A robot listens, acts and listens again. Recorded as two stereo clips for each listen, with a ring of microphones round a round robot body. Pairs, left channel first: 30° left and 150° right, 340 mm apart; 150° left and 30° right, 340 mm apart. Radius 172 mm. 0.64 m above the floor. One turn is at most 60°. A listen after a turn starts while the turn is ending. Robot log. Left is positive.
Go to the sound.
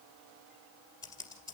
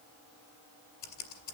note: The typing on a keyboard: 110° left.
cmd yaw +60
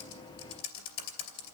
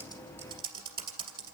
note: The typing on a keyboard is now 50° left.
cmd yaw +50
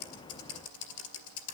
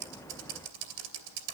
note: The typing on a keyboard is now 15° right.
cmd yaw -15
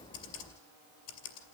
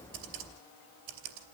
cmd fwd 1.0
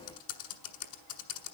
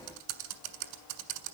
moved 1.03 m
cmd fwd 1.0
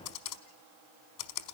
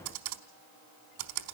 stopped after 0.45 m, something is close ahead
end: I am next to the typing on a keyboard.